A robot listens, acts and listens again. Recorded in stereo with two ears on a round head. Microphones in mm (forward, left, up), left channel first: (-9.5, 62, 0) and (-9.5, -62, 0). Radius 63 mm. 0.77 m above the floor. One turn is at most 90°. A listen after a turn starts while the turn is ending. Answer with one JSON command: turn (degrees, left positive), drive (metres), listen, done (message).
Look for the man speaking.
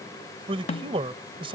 {"turn": -40}
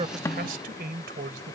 {"turn": -90}
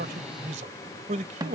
{"turn": -55}
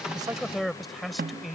{"done": "Found it: a man speaking, straight ahead."}